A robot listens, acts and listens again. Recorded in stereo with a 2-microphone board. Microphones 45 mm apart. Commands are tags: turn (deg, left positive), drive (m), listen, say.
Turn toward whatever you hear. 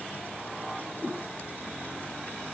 <turn deg="15"/>
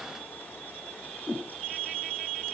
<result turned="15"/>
<say>Found it: a whoosh, straight ahead, 2 to 4 m away.</say>